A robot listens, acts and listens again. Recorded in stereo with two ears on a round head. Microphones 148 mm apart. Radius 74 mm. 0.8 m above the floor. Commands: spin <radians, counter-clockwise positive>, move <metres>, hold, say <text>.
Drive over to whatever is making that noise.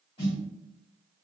spin 0.61
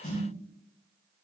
spin 1.92
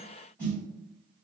move 1.0
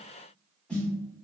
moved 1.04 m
move 1.0
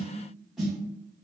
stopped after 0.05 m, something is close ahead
say Arrived at the snare drum, straight ahead.